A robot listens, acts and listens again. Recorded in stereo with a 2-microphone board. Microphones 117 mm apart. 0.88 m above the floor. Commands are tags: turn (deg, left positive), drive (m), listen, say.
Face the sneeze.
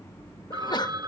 <turn deg="40"/>
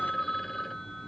<listen/>
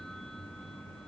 <say>I heard a sneeze, but can't make it out now. It was about straight ahead or 100° left.</say>